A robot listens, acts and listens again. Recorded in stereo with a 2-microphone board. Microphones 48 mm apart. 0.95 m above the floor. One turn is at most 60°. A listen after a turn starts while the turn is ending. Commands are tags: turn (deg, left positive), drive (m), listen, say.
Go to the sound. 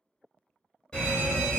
<turn deg="20"/>
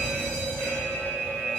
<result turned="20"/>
<turn deg="60"/>
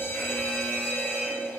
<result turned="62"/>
<turn deg="60"/>
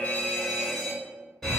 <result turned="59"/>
<turn deg="10"/>
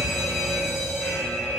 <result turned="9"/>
<drive m="1.0"/>
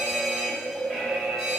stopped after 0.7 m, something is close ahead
<say>Arrived at the fire alarm, straight ahead.</say>